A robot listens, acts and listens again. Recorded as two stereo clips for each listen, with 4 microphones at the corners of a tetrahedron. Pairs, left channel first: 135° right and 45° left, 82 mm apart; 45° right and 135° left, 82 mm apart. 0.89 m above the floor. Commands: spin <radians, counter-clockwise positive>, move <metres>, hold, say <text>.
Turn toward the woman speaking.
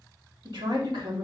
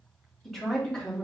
spin 0.61
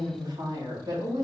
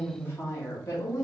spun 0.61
say Facing the woman speaking.